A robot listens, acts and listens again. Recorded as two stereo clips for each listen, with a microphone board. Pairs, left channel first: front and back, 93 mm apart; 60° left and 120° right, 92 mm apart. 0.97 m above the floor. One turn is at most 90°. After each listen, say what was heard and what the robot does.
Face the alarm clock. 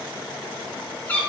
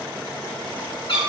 Keep listening.
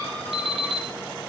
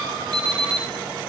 The alarm clock: 160° right. Turn 90° right.
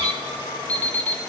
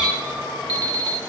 The alarm clock is now 75° right. Turn 75° right.
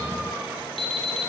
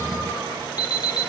The alarm clock is now 10° left. Turn 10° left.
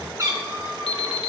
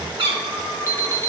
Found it: an alarm clock, straight ahead.